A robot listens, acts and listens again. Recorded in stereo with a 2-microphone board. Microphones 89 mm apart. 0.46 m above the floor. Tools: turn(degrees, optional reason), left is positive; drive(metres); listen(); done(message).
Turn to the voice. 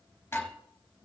listen()
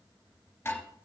listen()
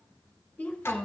turn(degrees=30)
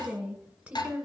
turn(degrees=-15, reason="So it is at 15° right.")
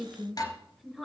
done("Found it: a woman speaking, straight ahead.")